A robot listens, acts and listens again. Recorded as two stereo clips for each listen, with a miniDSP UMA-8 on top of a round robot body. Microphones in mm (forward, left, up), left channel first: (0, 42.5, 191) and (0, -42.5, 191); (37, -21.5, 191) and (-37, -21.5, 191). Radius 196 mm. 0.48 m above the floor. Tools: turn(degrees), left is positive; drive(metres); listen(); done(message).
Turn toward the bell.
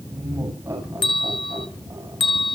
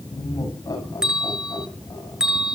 turn(degrees=100)
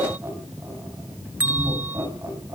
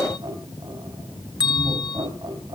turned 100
turn(degrees=-20)
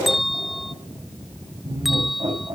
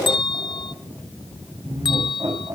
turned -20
done("Facing the bell, 1 to 2 m away.")